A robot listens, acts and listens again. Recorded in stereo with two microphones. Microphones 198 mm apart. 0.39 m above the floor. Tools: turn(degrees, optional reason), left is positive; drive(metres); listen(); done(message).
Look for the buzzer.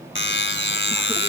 turn(degrees=70, reason="The buzzer: about 70° left or 110° left.")
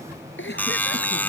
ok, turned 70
turn(degrees=10, reason="So it is at 10° left.")
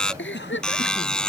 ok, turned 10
done("Facing the buzzer.")